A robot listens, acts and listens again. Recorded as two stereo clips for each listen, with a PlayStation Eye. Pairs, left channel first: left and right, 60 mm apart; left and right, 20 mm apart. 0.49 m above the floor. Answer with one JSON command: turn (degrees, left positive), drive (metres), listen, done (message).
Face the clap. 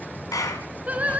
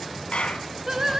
{"turn": 90}
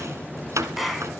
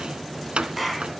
{"done": "Facing the clap, over 4 m away."}